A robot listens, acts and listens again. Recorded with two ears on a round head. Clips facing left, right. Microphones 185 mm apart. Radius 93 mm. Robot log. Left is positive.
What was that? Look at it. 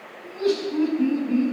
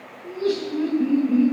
note: The laughter: about 75° left or 105° left.
cmd yaw +75
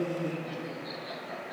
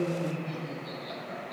note: So it is at 20° left.
cmd yaw +20
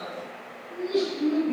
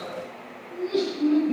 end: Found it: laughter, straight ahead.